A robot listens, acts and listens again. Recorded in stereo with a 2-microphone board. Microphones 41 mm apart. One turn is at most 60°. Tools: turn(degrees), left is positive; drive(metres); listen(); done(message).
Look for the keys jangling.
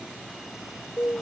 listen()
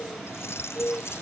turn(degrees=60)
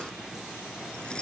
turn(degrees=30)
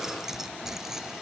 turn(degrees=-10)
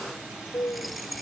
done("Facing the keys jangling.")